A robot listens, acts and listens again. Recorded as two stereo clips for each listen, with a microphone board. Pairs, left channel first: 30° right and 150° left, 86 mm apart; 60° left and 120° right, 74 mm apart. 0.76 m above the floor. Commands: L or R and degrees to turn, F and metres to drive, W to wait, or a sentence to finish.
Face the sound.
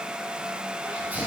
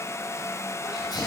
L80
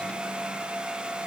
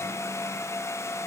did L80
Facing where the sneeze came from. I can't hear it now.